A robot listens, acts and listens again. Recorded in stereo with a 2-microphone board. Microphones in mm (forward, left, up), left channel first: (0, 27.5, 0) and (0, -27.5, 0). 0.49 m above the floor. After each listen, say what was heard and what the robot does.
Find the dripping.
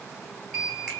Keep listening.
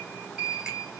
Keep listening.
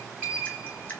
The dripping: about 20° left or 160° left. Turn 20° left.
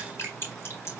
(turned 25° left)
So it is at 130° left. Turn 130° left.
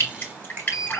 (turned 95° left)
The dripping is now 35° left. Turn 35° left.
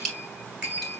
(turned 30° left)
The dripping is now 10° left. Turn 10° left.
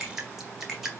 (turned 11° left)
Facing the dripping.